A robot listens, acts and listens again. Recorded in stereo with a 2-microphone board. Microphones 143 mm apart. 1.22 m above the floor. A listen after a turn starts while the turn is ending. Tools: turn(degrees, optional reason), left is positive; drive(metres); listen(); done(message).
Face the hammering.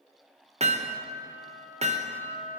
turn(degrees=-50, reason="The hammering: about 50° right or 130° right.")
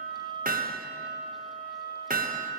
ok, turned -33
turn(degrees=-100, reason="So it is at 100° right.")
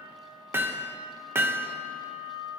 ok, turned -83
turn(degrees=-15, reason="The hammering is now 15° right.")
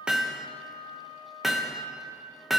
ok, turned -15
done("Facing the hammering, under 1 m away.")